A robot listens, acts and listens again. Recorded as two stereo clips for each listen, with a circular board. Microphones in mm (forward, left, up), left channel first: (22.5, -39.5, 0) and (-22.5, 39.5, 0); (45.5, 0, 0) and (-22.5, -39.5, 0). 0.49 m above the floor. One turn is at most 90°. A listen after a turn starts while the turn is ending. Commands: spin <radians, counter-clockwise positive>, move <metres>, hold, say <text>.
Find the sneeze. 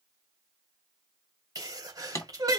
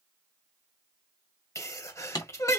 spin 1.31
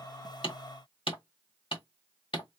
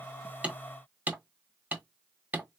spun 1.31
say I heard a sneeze from this way, but can't make it out now.